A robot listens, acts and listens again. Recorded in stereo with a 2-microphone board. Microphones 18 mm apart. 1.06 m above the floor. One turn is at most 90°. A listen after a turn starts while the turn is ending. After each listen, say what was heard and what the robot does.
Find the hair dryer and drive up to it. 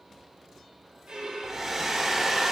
The hair dryer: about 25° right or 155° right. Turn 25° right.
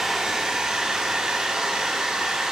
So it is at 130° right. Turn 90° right.
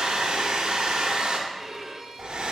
The hair dryer is now 70° right. Turn 70° right.
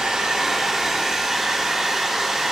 The hair dryer is now 25° right. Turn 25° right.
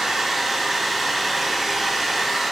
Drive 1.0 m forward.
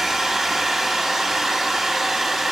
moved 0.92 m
The hair dryer is now 15° right. Turn 15° right.
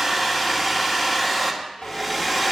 Drive 1.0 m forward.
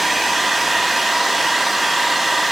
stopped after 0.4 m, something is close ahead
Arrived at the hair dryer, straight ahead.